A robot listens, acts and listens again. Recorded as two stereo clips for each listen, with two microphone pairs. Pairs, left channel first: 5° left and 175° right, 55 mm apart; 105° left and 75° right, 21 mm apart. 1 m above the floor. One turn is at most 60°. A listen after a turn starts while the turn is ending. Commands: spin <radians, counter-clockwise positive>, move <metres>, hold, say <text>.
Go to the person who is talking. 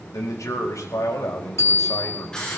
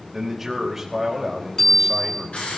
move 1.0
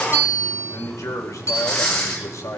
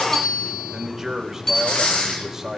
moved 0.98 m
spin -0.17
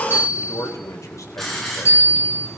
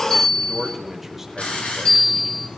move 1.0
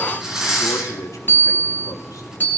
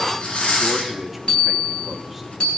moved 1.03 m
hold
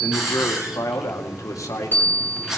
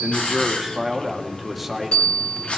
move 1.0
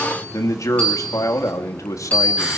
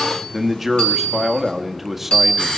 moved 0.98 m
move 1.0
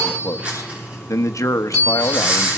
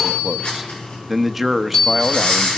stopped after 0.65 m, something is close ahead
say I am next to the man speaking.